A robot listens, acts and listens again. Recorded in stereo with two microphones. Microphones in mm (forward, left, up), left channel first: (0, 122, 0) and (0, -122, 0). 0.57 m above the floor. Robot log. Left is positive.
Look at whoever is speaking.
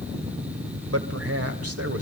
note: The man speaking: about 65° right or 115° right.
cmd yaw -65
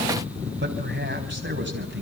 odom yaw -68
note: So it is at 45° right.
cmd yaw -45
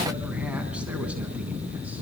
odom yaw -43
cmd idle
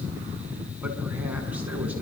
cmd idle
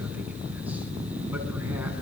end: Facing where the man speaking came from. I can't hear it now.